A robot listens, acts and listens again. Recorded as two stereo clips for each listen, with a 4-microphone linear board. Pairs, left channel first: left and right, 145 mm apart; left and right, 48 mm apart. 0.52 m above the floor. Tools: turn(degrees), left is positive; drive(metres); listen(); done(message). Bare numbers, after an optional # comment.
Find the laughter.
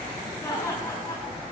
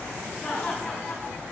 # The laughter: about 20° left or 160° left.
turn(20)
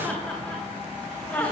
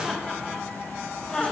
turn(30)
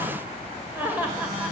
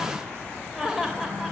# So it is at 10° right.
turn(-10)
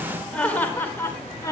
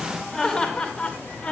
# The laughter is now 25° left.
turn(25)
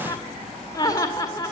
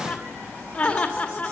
# The laughter is now 25° left.
turn(25)
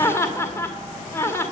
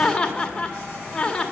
# The laughter is now 15° left.
turn(15)
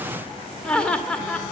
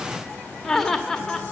done("Found it: laughter, straight ahead.")